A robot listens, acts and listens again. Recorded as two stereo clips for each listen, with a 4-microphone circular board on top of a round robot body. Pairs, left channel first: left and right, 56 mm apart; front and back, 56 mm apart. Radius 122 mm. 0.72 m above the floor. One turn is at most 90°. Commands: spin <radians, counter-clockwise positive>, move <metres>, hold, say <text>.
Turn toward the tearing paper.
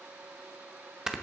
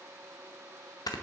hold
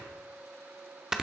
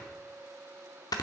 hold
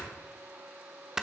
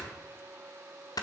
say I can't make out tearing paper to turn to.